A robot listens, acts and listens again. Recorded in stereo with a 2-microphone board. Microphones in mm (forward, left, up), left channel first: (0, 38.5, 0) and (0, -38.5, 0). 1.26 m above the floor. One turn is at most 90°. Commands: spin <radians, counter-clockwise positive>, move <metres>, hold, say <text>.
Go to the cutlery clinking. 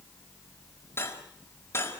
spin 0.61
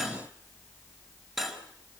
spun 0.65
move 1.0
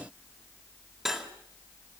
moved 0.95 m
move 1.0
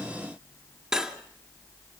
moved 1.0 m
move 1.0
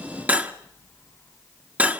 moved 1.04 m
spin -0.35
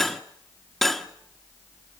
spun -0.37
move 1.0
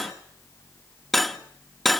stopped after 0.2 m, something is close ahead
say I am next to the cutlery clinking.